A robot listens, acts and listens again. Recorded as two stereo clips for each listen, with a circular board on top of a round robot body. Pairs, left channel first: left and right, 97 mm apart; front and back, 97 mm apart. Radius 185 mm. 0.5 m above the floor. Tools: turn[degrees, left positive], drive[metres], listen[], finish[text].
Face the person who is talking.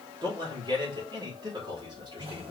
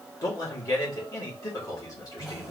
Thought: The man speaking: 50° right.
Action: turn[-50]
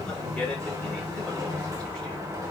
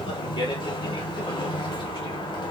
Thought: The man speaking is now 10° left.
Action: turn[10]
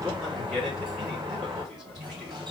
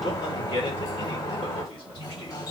Action: finish[Facing the man speaking, 2 to 4 m away.]